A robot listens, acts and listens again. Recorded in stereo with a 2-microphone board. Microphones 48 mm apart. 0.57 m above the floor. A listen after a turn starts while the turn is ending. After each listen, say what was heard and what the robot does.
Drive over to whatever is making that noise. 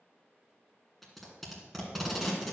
Turn 30° left.
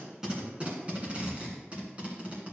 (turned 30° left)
So it is at 30° right. Turn 30° right.
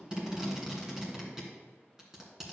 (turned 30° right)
The tape being pulled is now 10° right. Turn 10° right.
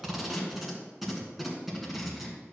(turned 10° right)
Drive 1.0 m forward.
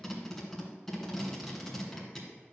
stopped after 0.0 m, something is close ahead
Blocked. The tape being pulled is further on, straight ahead.